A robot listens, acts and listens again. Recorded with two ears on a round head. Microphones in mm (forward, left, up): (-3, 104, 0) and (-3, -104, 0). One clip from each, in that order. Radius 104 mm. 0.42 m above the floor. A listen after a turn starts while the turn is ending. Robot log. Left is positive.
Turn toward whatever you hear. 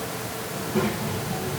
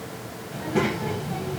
note: The child speaking: about 20° right or 160° right.
cmd yaw -20
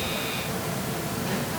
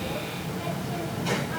note: So it is at 140° right.
cmd yaw -140
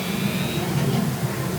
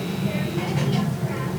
end: Found it: a child speaking, straight ahead.